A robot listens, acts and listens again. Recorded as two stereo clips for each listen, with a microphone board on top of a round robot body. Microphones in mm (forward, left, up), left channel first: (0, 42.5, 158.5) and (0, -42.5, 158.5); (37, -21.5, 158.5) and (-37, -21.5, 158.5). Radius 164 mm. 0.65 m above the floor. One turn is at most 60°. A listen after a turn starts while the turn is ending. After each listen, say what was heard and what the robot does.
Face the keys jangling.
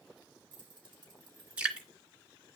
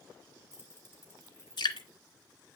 The keys jangling: 60° right. Turn 60° right.
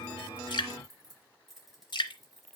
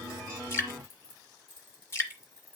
Facing the keys jangling, over 4 m away.